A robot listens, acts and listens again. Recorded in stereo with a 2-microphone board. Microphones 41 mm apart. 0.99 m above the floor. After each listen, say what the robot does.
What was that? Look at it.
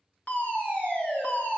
Turn 45° left.
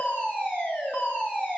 Turn 80° left.
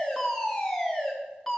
Facing the fire alarm, 2 to 4 m away.